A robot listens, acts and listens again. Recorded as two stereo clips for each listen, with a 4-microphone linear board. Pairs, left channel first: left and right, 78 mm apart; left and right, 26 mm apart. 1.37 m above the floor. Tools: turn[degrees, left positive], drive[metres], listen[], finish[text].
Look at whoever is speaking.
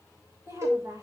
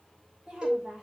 Thought: The woman speaking: about 45° right or 135° right.
Action: turn[-45]
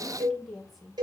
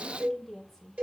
Action: finish[Facing the woman speaking.]